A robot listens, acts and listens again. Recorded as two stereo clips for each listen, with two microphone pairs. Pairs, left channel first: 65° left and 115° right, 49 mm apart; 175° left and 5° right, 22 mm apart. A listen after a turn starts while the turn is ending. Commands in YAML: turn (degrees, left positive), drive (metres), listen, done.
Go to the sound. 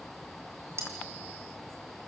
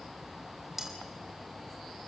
turn: -85
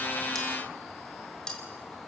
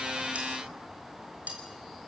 turn: -10
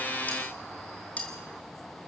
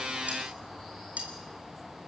drive: 1.0
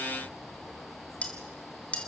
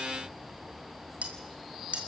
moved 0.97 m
drive: 1.0
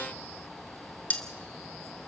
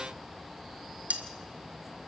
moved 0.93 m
drive: 1.0
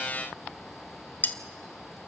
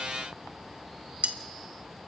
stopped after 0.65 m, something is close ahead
turn: 10
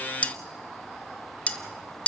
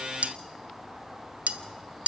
done: "I am next to the cutlery clinking."